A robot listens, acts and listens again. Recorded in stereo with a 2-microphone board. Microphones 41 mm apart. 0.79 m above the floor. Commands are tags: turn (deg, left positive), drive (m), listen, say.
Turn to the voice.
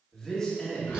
<turn deg="15"/>
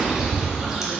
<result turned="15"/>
<listen/>
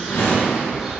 <listen/>
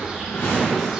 <say>I heard a man speaking, but can't make it out now. It was about straight ahead or 150° left.</say>